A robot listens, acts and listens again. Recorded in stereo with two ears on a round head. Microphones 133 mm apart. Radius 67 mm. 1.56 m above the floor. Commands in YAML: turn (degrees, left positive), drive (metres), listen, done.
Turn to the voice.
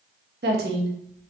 turn: -90
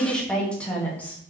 turn: 10
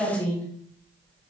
turn: 10
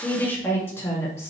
turn: 20
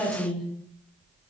done: "Facing the woman speaking, 2 to 4 m away."